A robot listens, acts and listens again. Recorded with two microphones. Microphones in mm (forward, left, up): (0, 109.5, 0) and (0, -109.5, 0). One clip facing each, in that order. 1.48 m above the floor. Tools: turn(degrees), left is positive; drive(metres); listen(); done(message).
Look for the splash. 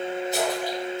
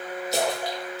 turn(degrees=-90)
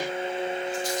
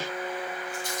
done("Facing where the splash came from. I can't hear it now.")